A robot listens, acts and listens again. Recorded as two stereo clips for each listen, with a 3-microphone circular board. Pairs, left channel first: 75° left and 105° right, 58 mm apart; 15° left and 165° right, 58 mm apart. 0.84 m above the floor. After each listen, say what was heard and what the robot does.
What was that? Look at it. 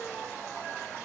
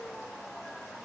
Keep listening.
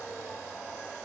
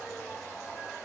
Keep listening.
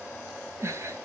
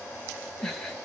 The giggle: 70° right. Turn 70° right.
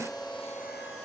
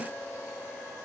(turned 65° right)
Keep listening.
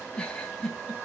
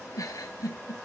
Facing the giggle, 2 to 4 m away.